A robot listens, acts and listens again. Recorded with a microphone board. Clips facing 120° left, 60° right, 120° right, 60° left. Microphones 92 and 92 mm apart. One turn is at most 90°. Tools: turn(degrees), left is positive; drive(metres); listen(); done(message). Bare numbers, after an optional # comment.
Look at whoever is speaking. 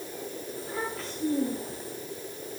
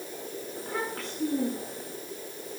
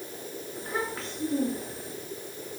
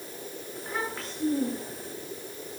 # The child speaking: 30° right.
turn(-30)
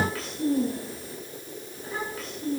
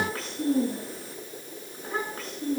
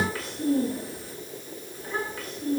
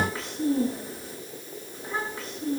done("Facing the child speaking.")